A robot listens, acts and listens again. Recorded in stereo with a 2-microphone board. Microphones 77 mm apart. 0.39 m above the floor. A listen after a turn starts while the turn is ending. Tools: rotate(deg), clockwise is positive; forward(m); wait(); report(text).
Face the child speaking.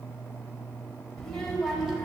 rotate(30)
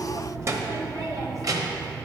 rotate(125)
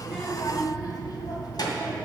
rotate(-65)
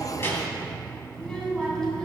rotate(-10)
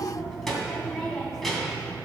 report("Facing the child speaking, 2 to 4 m away.")